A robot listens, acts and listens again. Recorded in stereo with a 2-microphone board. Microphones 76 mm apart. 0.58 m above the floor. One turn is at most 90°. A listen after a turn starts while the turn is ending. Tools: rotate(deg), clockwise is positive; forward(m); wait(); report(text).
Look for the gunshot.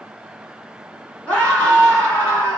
wait()
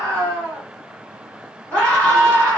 wait()
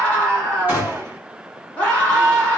rotate(20)
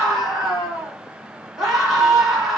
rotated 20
wait()
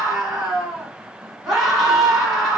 report("I heard a gunshot, but can't make it out now. It was about straight ahead or 140° right.")